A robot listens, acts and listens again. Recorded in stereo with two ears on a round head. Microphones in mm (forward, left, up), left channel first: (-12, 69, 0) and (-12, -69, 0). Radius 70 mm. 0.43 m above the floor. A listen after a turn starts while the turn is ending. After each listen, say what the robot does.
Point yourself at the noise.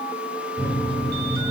Turn 15° right.
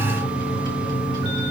Turn 150° right.
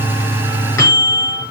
Turn 20° left.
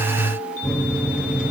Facing the microwave.